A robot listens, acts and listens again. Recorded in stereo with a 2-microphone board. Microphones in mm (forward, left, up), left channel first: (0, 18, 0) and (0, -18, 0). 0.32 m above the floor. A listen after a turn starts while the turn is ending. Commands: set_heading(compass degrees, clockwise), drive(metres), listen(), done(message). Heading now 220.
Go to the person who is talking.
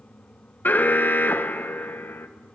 listen()
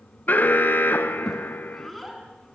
set_heading(190)
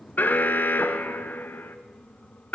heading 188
listen()
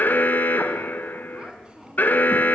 listen()
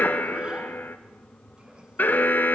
done("I heard a child speaking, but can't make it out now. It was about 25° right or 145° left. I did not reach it.")